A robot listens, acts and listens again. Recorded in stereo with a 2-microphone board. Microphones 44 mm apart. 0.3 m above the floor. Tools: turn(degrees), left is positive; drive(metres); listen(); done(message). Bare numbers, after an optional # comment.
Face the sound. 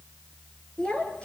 # The child speaking: about 25° left or 155° left.
turn(25)
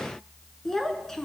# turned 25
turn(30)
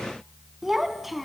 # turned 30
done("Facing the child speaking, 1 to 2 m away.")